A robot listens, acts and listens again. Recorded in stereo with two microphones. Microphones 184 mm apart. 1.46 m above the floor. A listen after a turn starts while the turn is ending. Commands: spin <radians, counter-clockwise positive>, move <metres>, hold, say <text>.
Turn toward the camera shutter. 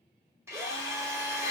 hold
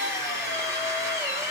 hold
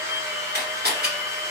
spin -1.05
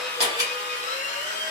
hold
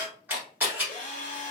spin -0.17
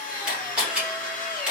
say Found it: a camera shutter, straight ahead.